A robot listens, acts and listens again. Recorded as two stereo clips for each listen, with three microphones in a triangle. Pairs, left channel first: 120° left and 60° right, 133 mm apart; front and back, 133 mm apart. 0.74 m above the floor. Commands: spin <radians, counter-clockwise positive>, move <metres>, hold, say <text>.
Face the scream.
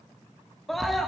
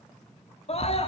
spin 0.52
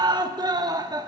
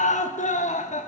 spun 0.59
say Found it: a scream, straight ahead, 1 to 2 m away.